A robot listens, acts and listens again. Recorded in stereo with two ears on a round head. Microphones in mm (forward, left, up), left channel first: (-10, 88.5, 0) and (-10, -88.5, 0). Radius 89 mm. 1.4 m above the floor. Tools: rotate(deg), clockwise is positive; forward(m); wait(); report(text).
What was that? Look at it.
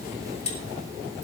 rotate(-30)
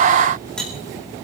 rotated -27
report("Facing the cutlery clinking.")